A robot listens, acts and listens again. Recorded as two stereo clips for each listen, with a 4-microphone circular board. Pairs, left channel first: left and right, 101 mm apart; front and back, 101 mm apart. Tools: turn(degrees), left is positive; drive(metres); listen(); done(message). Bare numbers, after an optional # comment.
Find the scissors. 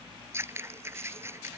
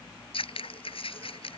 # The scissors: 25° right.
turn(-25)
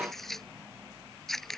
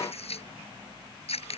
done("Facing the scissors.")